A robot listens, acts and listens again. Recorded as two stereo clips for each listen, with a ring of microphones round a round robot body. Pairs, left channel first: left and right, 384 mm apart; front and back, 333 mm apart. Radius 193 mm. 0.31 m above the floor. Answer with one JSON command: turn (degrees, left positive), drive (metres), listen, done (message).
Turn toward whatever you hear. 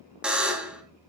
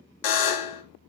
{"done": "Facing the buzzer, 1 to 2 m away."}